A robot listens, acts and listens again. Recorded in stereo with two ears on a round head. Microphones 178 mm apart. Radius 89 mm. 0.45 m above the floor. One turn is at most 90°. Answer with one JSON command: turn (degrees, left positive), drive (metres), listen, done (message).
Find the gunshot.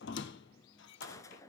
{"turn": 15}
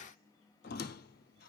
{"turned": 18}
{"listen": true}
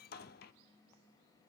{"done": "I heard a gunshot, but can't make it out now. It was about straight ahead or 145° left."}